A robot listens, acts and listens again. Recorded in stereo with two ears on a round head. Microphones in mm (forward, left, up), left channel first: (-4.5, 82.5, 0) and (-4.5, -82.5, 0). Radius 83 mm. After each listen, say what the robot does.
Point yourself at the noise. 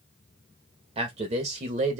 Turn 40° right.
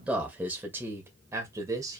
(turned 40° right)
Turn 20° right.
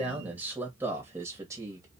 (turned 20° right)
Turn 15° right.
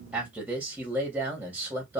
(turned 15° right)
Turn 10° right.
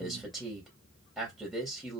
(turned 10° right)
Found it: a man speaking, straight ahead.